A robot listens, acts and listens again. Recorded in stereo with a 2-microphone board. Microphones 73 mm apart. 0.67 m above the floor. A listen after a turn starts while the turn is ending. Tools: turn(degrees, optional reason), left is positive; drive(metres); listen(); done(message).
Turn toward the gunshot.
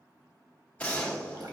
turn(degrees=20, reason="The gunshot: about 20° left or 160° left.")
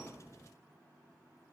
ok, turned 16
listen()
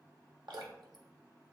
done("I heard a gunshot, but can't make it out now. It was about 5° left or 145° left.")